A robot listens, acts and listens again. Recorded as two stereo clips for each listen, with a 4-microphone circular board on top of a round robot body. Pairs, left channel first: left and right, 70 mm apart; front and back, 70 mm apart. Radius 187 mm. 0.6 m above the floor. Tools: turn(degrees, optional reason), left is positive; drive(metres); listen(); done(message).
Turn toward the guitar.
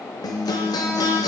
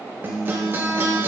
turn(degrees=120, reason="The guitar: 120° left.")
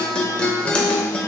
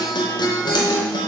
turn(degrees=15, reason="The guitar is now 15° left.")
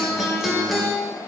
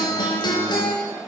done("Facing the guitar.")